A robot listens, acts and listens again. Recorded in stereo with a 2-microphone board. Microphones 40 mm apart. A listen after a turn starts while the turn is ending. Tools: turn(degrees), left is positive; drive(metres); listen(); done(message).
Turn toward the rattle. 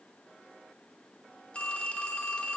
listen()
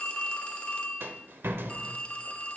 turn(degrees=-70)
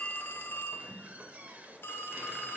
turn(degrees=-40)
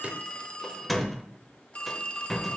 done("Facing the rattle.")